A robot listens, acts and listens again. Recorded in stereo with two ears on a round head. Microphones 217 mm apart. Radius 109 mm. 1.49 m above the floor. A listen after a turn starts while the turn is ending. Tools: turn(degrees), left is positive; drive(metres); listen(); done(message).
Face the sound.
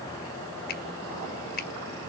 turn(degrees=40)
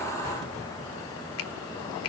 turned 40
turn(degrees=95)
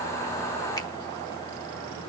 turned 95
listen()
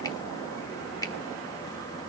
turn(degrees=15)
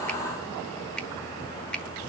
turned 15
done("Found it: a finger snap, straight ahead.")